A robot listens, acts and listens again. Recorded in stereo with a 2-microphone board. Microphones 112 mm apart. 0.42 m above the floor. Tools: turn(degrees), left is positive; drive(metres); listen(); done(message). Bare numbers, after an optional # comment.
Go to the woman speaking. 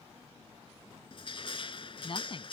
# The woman speaking: about 50° left or 130° left.
turn(50)
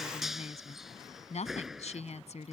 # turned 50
# So it is at 80° left.
turn(80)
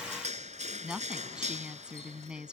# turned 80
drive(1.0)
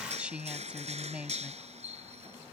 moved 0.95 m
# The woman speaking is now 10° right.
turn(-10)
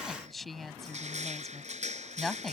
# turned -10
drive(1.0)
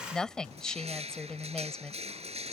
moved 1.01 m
drive(1.0)
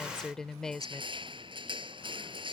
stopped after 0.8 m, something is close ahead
done("Arrived at the woman speaking, straight ahead.")